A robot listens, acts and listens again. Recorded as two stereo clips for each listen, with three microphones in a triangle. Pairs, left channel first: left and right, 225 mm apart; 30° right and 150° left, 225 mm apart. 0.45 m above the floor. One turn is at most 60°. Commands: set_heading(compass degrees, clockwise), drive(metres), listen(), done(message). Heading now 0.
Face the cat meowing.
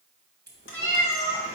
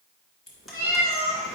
set_heading(300)
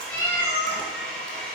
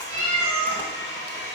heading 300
set_heading(240)
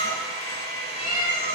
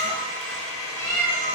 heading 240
set_heading(220)
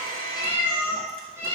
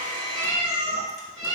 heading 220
set_heading(230)
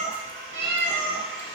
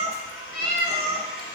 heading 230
done("Facing the cat meowing, 2 to 4 m away.")